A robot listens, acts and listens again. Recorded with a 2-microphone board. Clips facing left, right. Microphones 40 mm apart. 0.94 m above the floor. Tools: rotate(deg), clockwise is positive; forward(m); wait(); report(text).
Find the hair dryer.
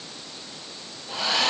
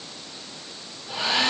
rotate(15)
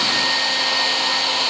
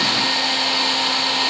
report("Facing the hair dryer.")